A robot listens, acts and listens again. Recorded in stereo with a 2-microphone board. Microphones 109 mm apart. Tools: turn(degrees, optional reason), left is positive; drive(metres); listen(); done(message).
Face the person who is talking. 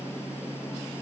listen()
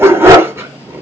listen()
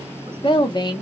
turn(degrees=40, reason="The woman speaking: about 40° left or 140° left.")
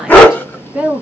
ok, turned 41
turn(degrees=-15, reason="So it is at 15° right.")
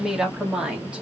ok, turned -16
turn(degrees=-10, reason="The woman speaking is now 10° right.")
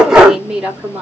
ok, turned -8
turn(degrees=-10, reason="The woman speaking is now 10° right.")
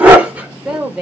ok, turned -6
done("Facing the woman speaking, 2 to 4 m away.")